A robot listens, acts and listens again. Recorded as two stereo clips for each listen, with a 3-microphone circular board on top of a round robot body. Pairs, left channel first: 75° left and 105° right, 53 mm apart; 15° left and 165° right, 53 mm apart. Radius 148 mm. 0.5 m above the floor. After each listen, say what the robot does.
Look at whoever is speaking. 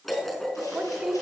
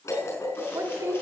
Turn 180° left.
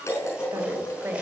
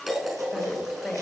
Turn 60° right.
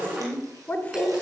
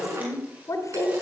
Turn 10° left.
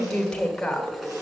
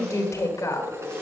Found it: a woman speaking, straight ahead, 2 to 4 m away.